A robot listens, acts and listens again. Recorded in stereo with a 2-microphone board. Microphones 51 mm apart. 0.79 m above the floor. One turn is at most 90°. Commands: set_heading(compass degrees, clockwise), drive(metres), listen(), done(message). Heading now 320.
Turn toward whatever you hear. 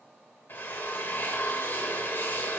set_heading(275)
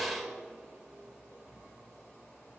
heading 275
done("Found it: a drill, straight ahead.")